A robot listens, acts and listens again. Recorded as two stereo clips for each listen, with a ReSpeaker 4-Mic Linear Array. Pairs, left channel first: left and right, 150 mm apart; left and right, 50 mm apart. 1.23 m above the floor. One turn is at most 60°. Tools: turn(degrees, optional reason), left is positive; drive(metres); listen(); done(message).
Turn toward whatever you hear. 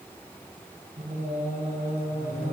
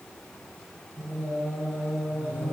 turn(degrees=-60)
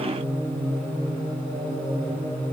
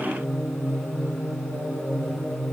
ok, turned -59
turn(degrees=-35, reason="So it is at 35° right.")
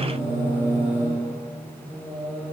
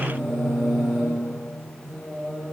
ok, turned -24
turn(degrees=-10, reason="The singing is now 10° right.")
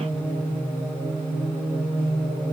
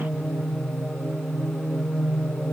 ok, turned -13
done("Found it: singing, straight ahead.")